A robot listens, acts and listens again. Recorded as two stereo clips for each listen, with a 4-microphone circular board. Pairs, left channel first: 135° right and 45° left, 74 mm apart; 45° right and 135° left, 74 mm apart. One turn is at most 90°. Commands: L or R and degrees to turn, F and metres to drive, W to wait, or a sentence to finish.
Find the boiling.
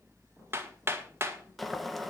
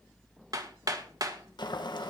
R45
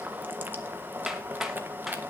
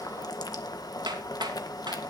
R15
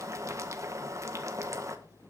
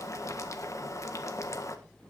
Found it: boiling, straight ahead, 1 to 2 m away.